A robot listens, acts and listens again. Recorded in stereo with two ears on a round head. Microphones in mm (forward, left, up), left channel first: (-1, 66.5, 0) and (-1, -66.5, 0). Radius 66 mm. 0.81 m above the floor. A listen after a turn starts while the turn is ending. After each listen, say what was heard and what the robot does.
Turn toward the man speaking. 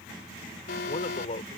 The man speaking: about 45° left or 135° left. Turn 45° left.
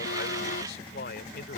So it is at 75° left. Turn 75° left.
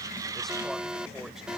Keep listening.
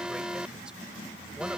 Keep listening.
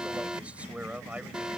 The man speaking is now 10° right. Turn 10° right.
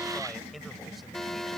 Keep listening.
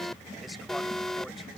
Keep listening.
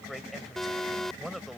Facing the man speaking.